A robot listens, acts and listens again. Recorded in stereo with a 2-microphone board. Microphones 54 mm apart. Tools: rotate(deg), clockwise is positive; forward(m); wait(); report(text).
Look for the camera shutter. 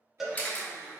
rotate(-30)
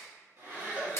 rotate(-115)
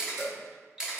rotate(15)
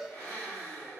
wait()
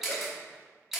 report("Facing the camera shutter.")